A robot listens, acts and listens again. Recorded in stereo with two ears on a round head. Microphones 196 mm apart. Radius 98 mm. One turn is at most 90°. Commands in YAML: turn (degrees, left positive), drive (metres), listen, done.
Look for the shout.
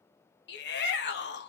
turn: 55
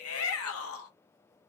turn: 75
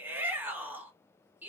turn: -10
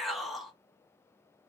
done: "Found it: a shout, straight ahead."